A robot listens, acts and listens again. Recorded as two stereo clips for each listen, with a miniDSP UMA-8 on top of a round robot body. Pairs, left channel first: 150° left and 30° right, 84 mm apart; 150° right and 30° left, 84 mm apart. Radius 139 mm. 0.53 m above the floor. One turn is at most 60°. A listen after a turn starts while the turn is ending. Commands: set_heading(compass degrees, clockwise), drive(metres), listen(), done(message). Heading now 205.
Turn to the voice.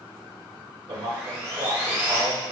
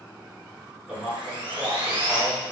set_heading(250)
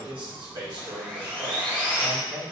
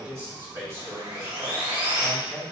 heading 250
set_heading(280)
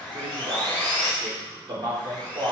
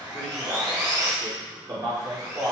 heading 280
done("Facing the man speaking, 1 to 2 m away.")